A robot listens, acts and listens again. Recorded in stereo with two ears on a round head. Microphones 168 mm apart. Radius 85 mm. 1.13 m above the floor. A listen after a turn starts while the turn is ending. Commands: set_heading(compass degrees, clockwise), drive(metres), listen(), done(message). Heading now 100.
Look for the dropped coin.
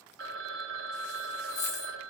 set_heading(65)
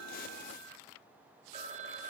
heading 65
listen()
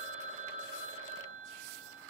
done("I heard a dropped coin, but can't make it out now. It was about straight ahead or 110° left.")